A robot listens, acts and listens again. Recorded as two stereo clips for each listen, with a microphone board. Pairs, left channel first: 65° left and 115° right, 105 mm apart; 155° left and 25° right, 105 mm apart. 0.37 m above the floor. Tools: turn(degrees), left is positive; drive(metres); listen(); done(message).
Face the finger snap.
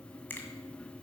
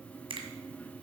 done("Facing the finger snap.")